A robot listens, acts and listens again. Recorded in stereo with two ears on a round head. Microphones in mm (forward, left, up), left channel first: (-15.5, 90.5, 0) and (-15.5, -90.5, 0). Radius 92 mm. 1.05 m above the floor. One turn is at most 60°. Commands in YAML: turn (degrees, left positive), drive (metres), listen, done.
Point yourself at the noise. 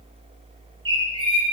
turn: -20
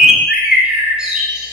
done: "Found it: a bird, straight ahead."